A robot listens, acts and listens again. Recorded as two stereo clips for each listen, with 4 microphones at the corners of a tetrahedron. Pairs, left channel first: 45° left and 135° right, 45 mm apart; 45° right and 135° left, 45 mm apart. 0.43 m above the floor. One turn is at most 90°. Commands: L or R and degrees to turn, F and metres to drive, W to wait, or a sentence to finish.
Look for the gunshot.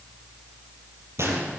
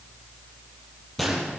R90
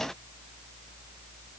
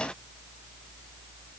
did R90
R40
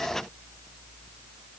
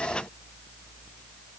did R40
I heard a gunshot from this way, but can't make it out now.